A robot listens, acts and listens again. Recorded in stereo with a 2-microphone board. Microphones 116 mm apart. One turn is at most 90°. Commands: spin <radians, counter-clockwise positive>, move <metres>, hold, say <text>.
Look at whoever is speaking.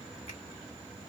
hold
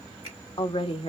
spin 0.96
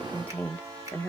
spin 0.26
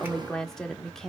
say Found it: a woman speaking, straight ahead, 1 to 2 m away.